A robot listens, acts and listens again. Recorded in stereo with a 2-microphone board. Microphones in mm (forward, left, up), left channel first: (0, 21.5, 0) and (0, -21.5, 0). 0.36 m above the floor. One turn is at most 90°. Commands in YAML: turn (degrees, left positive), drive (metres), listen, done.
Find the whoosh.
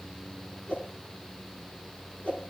turn: 35
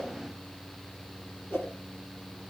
turn: 90
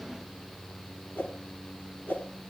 turn: 50
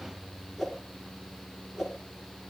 done: "Facing the whoosh, 2 to 4 m away."